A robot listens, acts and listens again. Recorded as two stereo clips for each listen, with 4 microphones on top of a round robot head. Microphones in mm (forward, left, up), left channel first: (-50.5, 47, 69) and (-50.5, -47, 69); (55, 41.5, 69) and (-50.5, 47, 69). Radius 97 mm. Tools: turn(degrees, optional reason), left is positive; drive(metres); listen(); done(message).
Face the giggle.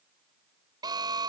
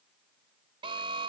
listen()
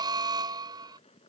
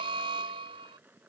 listen()
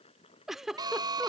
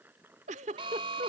turn(degrees=-175, reason="The giggle: 175° right.")
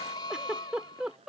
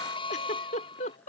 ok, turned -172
done("Facing the giggle.")